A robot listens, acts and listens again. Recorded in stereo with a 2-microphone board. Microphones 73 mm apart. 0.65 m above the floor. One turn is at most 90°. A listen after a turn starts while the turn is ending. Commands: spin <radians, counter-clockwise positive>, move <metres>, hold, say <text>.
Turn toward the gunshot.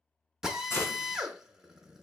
spin 0.52
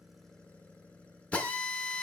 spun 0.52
hold
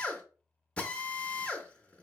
say I heard a gunshot, but can't make it out now. It was about straight ahead or 120° left.